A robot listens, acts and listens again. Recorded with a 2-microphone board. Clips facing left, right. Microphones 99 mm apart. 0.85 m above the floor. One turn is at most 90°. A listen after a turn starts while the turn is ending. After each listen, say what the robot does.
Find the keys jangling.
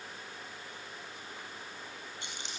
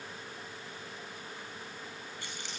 Turn 20° left.
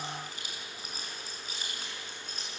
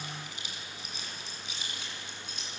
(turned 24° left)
Turn 90° left.
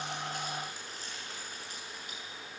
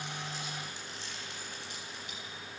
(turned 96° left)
Turn 40° left.
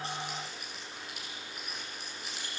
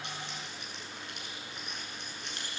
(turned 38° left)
Facing the keys jangling.